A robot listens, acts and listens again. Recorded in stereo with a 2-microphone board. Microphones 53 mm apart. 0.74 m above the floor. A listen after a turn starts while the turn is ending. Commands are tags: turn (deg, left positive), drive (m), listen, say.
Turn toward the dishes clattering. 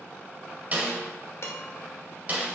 <turn deg="60"/>
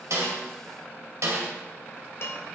<turn deg="65"/>
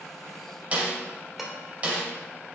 <say>Facing the dishes clattering, 1 to 2 m away.</say>